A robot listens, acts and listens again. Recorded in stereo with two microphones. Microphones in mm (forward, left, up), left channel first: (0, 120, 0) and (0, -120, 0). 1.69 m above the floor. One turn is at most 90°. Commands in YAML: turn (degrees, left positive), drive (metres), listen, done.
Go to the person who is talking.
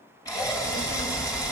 turn: 70
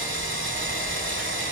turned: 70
listen: true
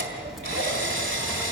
drive: 1.0
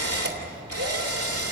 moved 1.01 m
drive: 1.0
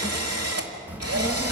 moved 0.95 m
drive: 1.0
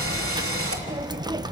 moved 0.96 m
turn: -20
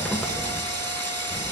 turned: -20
drive: 1.0
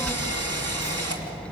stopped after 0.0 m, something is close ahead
done: "Arrived at the child speaking, straight ahead."